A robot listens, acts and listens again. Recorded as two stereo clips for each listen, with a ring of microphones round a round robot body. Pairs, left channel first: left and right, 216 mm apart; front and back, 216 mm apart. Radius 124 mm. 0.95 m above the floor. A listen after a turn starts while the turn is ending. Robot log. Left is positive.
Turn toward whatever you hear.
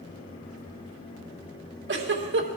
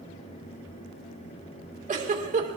note: The giggle: 125° right.
cmd yaw -125
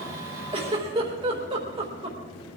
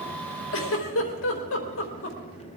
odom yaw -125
note: The giggle is now 20° right.
cmd yaw -20
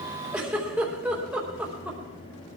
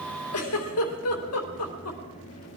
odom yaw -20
end: Facing the giggle, 2 to 4 m away.